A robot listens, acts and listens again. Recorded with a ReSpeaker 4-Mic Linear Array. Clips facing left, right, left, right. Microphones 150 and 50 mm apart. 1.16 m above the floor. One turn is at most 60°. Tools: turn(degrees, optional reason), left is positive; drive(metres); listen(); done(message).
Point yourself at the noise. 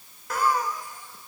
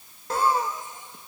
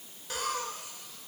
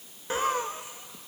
turn(degrees=-25, reason="The laughter: about 25° right or 155° right.")
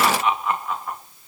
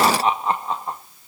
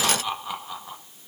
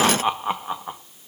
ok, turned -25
turn(degrees=-30, reason="The laughter: about 30° right or 150° right.")
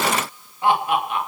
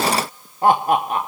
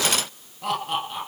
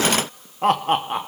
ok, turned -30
turn(degrees=-60, reason="So it is at 140° right.")
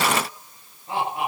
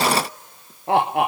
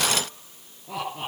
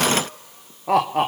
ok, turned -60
turn(degrees=-60, reason="The laughter is now 80° right.")
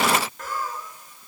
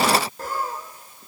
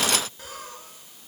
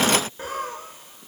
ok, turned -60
turn(degrees=-35, reason="The laughter is now 35° right.")
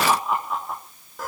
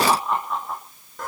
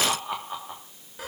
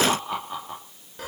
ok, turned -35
done("Found it: laughter, straight ahead, 2 to 4 m away.")